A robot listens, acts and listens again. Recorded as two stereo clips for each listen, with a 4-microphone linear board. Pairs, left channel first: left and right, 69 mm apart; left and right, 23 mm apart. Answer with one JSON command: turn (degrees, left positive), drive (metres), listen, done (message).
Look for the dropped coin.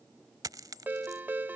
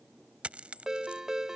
{"turn": -65}
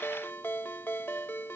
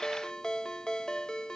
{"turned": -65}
{"listen": true}
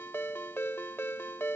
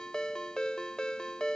{"done": "I heard a dropped coin, but can't make it out now. It was about straight ahead or 50° right."}